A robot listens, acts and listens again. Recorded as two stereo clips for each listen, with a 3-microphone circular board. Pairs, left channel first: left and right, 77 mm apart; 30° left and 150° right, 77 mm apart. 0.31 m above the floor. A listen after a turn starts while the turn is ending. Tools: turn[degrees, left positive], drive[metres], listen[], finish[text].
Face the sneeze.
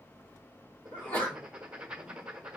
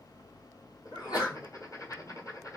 Thought: The sneeze: 25° left.
Action: turn[25]
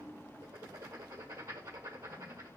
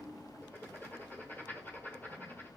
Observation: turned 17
Thought: Nothing new. It was at 10° left.
Action: turn[10]
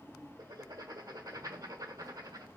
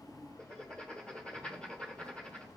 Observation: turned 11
Action: finish[I heard a sneeze from this way, but can't make it out now.]